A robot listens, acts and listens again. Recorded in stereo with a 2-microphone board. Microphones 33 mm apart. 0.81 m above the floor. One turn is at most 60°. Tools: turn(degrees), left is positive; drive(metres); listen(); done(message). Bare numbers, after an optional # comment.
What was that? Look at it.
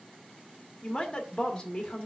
# The woman speaking: about 20° left or 160° left.
turn(20)
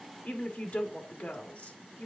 # So it is at 140° left.
turn(60)
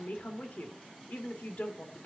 # The woman speaking is now 70° left.
turn(60)
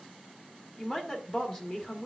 # The woman speaking is now 25° left.
turn(25)
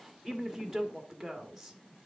done("Found it: a woman speaking, straight ahead.")